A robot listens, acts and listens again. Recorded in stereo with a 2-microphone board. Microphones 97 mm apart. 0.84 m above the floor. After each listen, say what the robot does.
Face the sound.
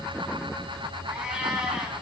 Turn 30° right.
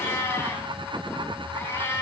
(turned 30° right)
Turn 25° left.
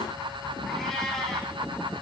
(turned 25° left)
Facing the cat meowing.